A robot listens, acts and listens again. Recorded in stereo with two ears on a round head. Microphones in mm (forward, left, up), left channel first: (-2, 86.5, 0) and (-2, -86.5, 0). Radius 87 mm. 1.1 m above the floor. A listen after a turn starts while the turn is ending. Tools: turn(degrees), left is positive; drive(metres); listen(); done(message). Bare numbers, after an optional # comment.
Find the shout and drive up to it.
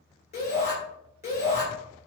# The shout: about 35° left or 145° left.
turn(35)
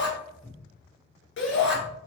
# So it is at 105° left.
turn(105)
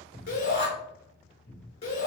# The shout is now 35° left.
turn(35)
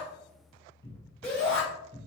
# The shout is now 10° left.
turn(10)
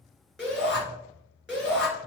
drive(1.0)
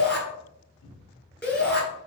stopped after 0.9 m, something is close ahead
done("Arrived at the shout, straight ahead.")